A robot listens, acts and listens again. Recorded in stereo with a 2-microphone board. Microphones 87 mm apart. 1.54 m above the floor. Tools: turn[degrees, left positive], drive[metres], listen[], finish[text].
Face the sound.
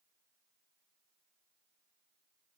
Action: listen[]
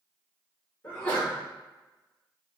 Thought: The sneeze: about 15° left or 165° left.
Action: turn[15]
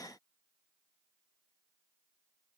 Action: listen[]
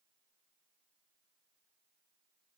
Action: finish[I heard a sneeze, but can't make it out now. It was about straight ahead or 150° left.]